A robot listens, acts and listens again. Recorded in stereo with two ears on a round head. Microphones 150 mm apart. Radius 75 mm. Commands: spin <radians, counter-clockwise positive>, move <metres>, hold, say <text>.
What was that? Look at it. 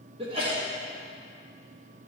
spin -0.61
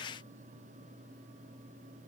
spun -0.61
hold
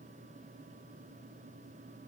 say I heard a sneeze, but can't make it out now. It was about straight ahead or 110° right.